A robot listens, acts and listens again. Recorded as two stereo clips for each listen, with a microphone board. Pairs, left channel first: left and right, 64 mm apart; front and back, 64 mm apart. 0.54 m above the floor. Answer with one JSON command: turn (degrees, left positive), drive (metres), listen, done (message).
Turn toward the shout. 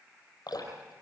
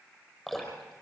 {"listen": true}
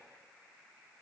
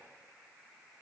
{"listen": true}
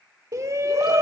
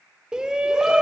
{"turn": -105}
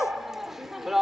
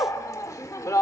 {"done": "Found it: a shout, straight ahead."}